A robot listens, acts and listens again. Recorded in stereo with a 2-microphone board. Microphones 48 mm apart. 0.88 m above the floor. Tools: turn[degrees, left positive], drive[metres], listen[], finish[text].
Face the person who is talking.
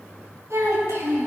Action: turn[-90]
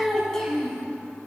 Thought: So it is at 10° left.
Action: turn[10]
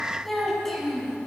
Action: finish[Found it: a child speaking, straight ahead, 2 to 4 m away.]